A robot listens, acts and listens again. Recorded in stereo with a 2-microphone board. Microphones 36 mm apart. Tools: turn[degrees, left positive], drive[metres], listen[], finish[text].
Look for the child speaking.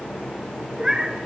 Action: listen[]
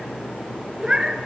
Action: listen[]
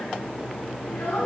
Action: turn[90]
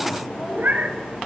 Action: listen[]
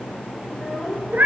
Action: finish[Found it: a child speaking, straight ahead, over 4 m away.]